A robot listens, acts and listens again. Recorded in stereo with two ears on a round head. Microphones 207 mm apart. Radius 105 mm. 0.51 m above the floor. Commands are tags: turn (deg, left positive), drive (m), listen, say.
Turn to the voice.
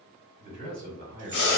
<turn deg="-45"/>
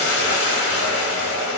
<listen/>
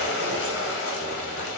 <listen/>
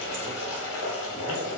<say>I heard a man speaking, but can't make it out now. It was about straight ahead or 90° right.</say>